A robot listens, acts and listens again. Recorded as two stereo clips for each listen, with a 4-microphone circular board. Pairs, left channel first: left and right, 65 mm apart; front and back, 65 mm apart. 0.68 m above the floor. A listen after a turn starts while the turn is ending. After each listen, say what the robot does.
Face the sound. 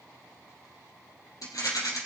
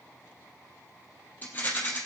Turn 60° left.
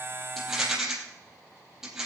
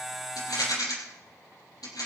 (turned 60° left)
Turn 10° right.
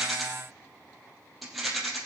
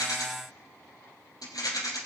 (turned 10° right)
Facing the rattle, 2 to 4 m away.